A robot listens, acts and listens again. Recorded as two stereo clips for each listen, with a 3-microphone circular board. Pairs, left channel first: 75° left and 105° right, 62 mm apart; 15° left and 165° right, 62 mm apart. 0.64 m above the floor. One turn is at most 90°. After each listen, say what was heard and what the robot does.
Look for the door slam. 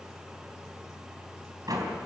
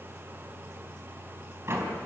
The door slam: 120° right. Turn 90° right.
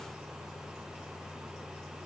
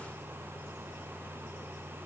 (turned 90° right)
Nothing new. It was at 30° right. Turn 30° right.
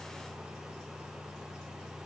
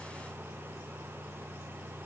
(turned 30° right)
Facing where the door slam came from. I can't hear it now.